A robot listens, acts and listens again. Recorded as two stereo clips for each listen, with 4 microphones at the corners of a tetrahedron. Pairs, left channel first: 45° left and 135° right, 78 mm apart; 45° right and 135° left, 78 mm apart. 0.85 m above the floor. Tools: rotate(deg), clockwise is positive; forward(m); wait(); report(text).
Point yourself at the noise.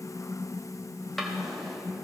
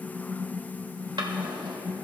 rotate(-135)
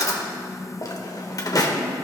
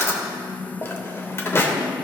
rotate(-10)
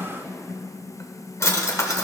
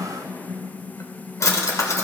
report("Found it: a drawer, straight ahead, under 1 m away.")